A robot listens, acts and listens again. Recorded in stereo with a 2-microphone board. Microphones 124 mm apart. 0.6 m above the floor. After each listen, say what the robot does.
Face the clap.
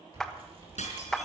Turn 30° left.
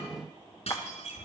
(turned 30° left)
Keep listening.
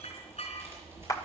Turn 145° left.
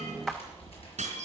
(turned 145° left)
Facing the clap, 1 to 2 m away.